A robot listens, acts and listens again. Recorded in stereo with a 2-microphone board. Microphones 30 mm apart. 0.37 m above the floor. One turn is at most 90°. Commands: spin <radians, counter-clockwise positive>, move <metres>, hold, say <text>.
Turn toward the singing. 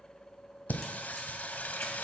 spin 1.31
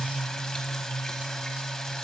spin 0.44
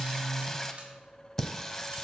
spin 0.26
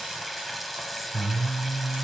say Facing the singing.